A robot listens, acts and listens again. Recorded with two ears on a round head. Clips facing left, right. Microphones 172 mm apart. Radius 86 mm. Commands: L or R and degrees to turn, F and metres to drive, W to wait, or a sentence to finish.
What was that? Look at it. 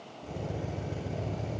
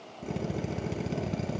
R90
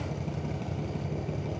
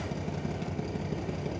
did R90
Found it: a drill, straight ahead.